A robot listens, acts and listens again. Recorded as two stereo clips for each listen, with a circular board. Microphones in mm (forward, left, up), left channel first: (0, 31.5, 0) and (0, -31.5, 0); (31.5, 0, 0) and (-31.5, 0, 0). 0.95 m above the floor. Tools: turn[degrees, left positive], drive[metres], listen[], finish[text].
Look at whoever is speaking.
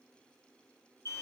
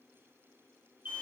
Action: listen[]
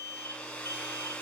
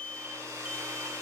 Action: listen[]
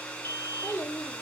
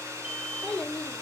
Thought: The child speaking: 80° left.
Action: turn[80]
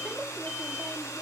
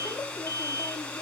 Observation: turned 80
Action: listen[]
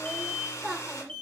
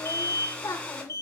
Action: finish[Found it: a child speaking, straight ahead, 1 to 2 m away.]